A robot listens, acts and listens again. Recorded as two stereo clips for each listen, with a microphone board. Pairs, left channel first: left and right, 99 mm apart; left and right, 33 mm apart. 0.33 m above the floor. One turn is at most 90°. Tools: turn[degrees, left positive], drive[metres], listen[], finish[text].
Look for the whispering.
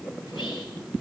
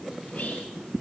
Action: listen[]
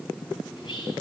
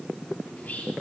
Thought: The whispering: about 50° left or 130° left.
Action: turn[50]
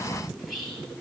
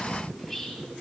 Action: finish[Found it: whispering, straight ahead.]